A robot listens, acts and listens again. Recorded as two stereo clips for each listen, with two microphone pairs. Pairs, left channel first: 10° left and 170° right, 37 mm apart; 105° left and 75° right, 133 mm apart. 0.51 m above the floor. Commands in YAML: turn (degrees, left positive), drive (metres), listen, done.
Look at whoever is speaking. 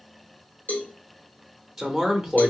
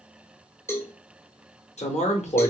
turn: 110
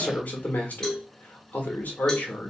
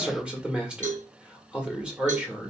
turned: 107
done: "Found it: a man speaking, straight ahead."